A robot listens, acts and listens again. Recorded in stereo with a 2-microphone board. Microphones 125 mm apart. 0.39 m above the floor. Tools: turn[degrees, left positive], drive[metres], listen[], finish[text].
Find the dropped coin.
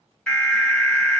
Action: listen[]
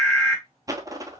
Thought: The dropped coin: about 30° right or 150° right.
Action: turn[-30]
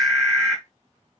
Action: listen[]
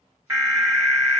Action: finish[I heard a dropped coin, but can't make it out now. It was about straight ahead or 120° right.]